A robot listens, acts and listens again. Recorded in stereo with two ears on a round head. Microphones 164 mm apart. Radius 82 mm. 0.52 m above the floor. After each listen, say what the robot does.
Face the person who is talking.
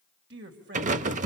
Turn 65° right.
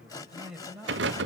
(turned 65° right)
Found it: a man speaking, straight ahead, 2 to 4 m away.